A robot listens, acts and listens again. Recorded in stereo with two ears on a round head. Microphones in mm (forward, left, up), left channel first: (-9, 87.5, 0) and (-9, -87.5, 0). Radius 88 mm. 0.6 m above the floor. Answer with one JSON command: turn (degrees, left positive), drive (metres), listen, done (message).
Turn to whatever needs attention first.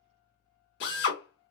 {"listen": true}
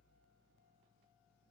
{"listen": true}
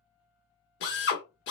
{"done": "I can't make out anything urgent to turn to."}